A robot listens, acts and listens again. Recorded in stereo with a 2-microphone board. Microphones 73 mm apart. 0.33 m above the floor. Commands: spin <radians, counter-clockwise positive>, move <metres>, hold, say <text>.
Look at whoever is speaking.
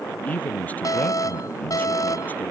spin 0.35
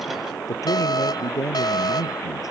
spin 2.27
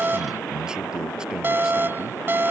spin -0.17
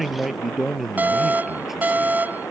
say Facing the man speaking.